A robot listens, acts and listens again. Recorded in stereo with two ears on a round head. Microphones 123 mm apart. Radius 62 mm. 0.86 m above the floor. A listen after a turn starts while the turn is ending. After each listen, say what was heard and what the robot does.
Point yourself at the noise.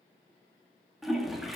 Turn 30° left.
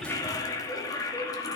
So it is at 155° left. Turn 155° left.
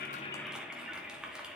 Facing the toilet flushing, 1 to 2 m away.